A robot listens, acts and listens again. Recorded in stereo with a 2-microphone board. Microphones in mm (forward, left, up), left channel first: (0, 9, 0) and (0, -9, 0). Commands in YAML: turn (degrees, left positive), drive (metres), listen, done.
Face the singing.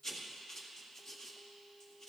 listen: true
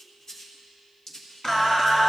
turn: 25
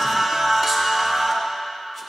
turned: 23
done: "Facing the singing."